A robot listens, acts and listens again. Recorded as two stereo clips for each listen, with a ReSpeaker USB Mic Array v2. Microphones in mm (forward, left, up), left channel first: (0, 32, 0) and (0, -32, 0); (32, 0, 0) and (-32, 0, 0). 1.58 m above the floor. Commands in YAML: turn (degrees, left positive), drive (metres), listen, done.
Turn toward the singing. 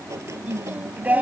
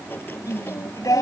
turn: -25
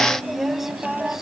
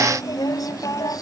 done: "Facing the singing."